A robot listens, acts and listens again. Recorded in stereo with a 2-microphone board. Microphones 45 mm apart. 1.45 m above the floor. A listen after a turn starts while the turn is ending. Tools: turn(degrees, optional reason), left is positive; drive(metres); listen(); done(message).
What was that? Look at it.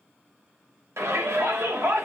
turn(degrees=-90)
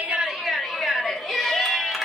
done("Found it: a shout, straight ahead.")